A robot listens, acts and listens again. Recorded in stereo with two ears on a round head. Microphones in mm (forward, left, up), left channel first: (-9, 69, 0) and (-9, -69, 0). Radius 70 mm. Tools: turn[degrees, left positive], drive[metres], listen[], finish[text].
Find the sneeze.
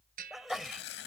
Action: turn[30]
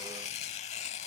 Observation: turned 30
Action: listen[]
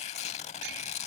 Action: finish[I heard a sneeze, but can't make it out now. It was about 30° right or 150° left.]